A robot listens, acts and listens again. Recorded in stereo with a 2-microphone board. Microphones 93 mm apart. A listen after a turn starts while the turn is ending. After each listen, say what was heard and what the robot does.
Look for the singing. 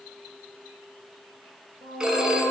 The singing: about 65° right or 115° right. Turn 65° right.
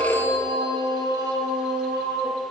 So it is at 45° right. Turn 45° right.
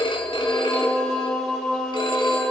Found it: singing, straight ahead, 2 to 4 m away.